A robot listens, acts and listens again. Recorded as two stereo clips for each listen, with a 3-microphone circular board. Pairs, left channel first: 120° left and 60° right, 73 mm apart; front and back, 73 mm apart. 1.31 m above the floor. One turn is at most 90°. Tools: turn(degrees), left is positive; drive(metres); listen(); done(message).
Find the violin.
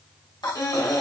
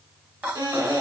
turn(degrees=90)
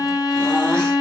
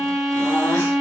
turn(degrees=90)
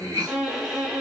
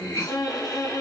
turn(degrees=20)
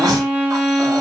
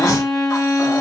done("Found it: a violin, straight ahead.")